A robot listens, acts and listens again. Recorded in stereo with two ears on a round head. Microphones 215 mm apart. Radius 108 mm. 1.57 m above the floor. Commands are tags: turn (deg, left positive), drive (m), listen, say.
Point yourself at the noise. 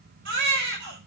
<turn deg="-50"/>
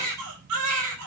<turn deg="-80"/>
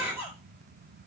<turn deg="-10"/>
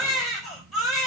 <say>Found it: a baby crying, straight ahead.</say>